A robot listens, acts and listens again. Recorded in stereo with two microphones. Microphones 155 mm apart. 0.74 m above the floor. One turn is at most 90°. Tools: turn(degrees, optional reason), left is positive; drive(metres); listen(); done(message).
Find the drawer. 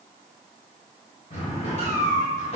turn(degrees=50, reason="The drawer: about 50° left or 130° left.")
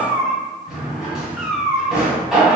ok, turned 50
done("Found it: a drawer, straight ahead, 1 to 2 m away.")